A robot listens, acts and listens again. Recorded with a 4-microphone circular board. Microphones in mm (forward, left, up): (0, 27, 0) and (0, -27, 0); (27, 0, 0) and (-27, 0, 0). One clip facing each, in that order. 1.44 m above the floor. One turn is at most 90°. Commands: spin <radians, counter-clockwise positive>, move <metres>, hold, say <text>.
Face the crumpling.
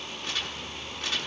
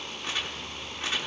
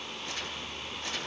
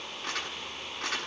spin -1.57
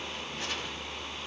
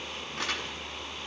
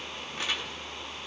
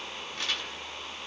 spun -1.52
spin -1.40
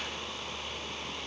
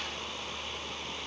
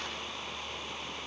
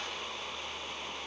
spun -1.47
hold
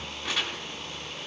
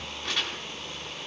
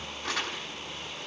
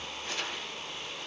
say Facing the crumpling.